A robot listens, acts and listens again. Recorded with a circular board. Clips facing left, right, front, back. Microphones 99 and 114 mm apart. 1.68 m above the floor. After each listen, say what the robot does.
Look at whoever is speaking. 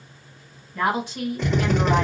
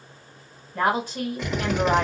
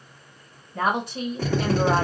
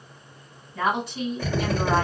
Turn 40° right.
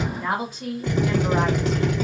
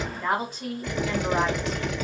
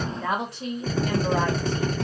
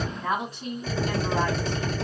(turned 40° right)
Found it: a woman speaking, straight ahead.